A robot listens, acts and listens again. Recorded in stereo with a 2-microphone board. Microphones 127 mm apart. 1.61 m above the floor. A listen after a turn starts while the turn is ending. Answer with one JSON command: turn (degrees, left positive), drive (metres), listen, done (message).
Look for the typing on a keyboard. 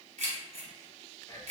{"listen": true}
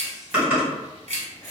{"turn": -30}
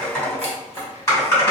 {"turn": 25}
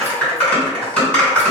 {"turn": 15}
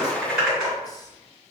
{"done": "Found it: typing on a keyboard, straight ahead, 2 to 4 m away."}